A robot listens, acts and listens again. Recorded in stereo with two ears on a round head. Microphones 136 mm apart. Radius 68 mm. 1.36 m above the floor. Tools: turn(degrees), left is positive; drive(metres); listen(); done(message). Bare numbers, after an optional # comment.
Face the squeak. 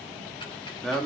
listen()
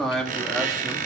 # The squeak: about 55° right or 125° right.
turn(-55)
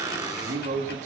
# So it is at 30° right.
turn(-30)
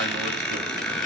done("Facing the squeak, 2 to 4 m away.")